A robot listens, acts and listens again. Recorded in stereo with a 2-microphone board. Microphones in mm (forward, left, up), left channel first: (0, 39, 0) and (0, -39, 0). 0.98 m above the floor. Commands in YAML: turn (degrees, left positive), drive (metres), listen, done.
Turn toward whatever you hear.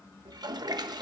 turn: -60
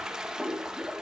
turn: -10
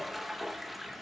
done: "Facing the toilet flushing."